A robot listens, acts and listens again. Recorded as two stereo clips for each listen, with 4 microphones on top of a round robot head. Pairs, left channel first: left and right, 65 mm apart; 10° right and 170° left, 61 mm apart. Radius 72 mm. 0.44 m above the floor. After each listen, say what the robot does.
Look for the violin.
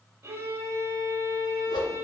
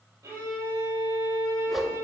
Turn 140° right.
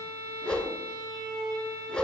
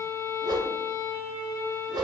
Turn 55° right.
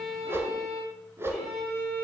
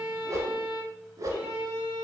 Facing the violin, 2 to 4 m away.